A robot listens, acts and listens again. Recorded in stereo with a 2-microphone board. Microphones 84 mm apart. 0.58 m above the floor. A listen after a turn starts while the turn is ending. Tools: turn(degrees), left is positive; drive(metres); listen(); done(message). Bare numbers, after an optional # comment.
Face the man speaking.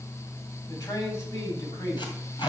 # The man speaking: about 50° left or 130° left.
turn(50)
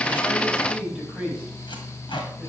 done("Facing the man speaking, over 4 m away.")